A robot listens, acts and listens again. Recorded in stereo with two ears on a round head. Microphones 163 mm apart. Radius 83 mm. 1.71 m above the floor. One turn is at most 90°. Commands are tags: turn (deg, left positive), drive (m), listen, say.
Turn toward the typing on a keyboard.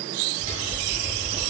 <turn deg="-25"/>
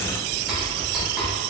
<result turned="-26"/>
<say>Found it: typing on a keyboard, straight ahead, 2 to 4 m away.</say>